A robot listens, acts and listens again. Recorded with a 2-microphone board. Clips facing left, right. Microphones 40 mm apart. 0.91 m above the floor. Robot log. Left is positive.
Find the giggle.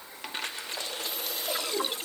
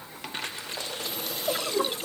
note: The giggle: about 65° right or 115° right.
cmd yaw -65
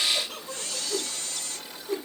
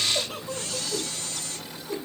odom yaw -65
end: Found it: a giggle, straight ahead.